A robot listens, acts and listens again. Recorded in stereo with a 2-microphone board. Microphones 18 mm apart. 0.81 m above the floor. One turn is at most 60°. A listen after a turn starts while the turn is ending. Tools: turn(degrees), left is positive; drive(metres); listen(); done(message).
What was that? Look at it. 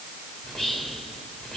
turn(degrees=30)
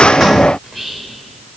done("Found it: whispering, straight ahead, 2 to 4 m away.")